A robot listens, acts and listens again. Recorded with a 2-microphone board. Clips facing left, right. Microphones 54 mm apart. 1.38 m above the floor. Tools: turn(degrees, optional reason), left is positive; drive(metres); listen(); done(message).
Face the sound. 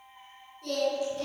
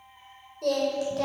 turn(degrees=-90)
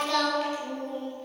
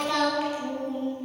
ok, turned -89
done("Facing the singing, over 4 m away.")